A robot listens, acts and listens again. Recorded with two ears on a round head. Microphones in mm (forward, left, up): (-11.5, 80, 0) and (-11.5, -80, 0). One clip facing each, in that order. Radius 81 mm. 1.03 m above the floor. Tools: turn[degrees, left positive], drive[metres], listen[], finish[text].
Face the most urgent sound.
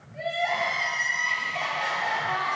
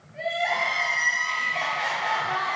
Action: turn[30]
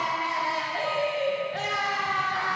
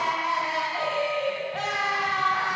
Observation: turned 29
Thought: So it is at 150° left.
Action: turn[150]
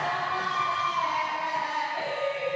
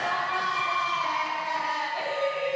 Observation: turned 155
Action: finish[Facing the crying, 2 to 4 m away.]